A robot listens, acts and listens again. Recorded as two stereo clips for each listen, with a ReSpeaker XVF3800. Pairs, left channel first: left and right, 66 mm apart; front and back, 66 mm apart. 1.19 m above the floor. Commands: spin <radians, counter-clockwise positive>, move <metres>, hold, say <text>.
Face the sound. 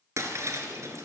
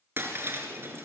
spin -2.27
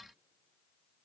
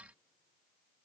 say I heard breaking glass from this way, but can't make it out now.